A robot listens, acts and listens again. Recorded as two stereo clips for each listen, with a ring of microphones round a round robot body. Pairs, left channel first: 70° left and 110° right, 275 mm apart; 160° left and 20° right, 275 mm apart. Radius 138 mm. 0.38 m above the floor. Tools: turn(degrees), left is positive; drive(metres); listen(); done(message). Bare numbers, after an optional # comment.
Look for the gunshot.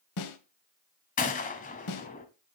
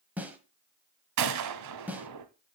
done("Facing the gunshot, 1 to 2 m away.")